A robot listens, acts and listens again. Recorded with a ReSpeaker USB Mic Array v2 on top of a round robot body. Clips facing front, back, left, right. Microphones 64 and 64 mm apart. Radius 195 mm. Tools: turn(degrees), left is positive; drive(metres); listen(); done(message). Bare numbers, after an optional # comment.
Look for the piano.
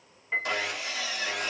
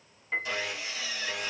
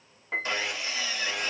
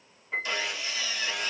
# The piano: 85° left.
turn(85)
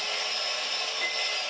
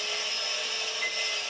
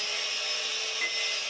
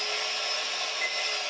listen()
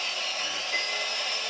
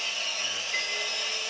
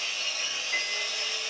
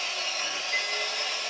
listen()
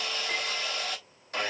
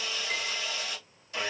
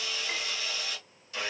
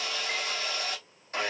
done("I heard a piano from this way, but can't make it out now.")